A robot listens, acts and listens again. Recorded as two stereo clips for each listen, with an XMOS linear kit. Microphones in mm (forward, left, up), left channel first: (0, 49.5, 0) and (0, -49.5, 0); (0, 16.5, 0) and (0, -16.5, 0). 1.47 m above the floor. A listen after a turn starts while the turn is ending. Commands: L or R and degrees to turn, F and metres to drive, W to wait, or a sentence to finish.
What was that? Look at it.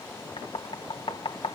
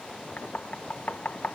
L65
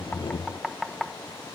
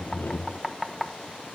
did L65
Facing the knocking.